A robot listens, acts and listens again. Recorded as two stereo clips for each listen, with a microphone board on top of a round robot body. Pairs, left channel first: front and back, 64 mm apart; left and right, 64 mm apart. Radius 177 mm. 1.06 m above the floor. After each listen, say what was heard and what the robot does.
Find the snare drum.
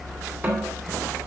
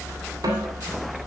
The snare drum: 115° right. Turn 115° right.
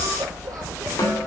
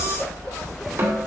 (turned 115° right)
The snare drum is now 35° right. Turn 35° right.
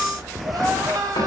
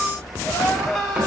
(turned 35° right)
Keep listening.
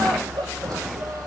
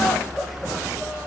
Keep listening.
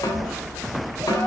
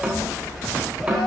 The snare drum is now 20° right. Turn 20° right.
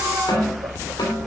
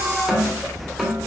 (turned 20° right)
Found it: a snare drum, straight ahead.